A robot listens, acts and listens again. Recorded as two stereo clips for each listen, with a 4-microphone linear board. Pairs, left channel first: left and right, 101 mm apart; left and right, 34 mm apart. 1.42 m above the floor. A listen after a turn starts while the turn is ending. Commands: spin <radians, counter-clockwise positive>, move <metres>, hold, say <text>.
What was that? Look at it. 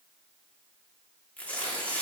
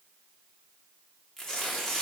spin 0.52
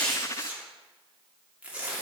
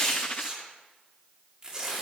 spin -0.26
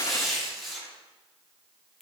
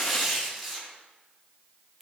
say Facing the tearing paper.